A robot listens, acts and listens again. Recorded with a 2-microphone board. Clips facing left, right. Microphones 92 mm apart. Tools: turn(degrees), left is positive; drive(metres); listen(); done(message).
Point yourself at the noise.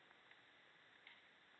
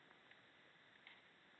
listen()
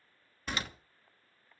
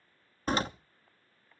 turn(degrees=-40)
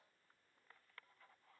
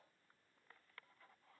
listen()
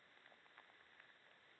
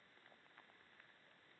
done("I heard a door slam, but can't make it out now. It was about straight ahead or 100° right.")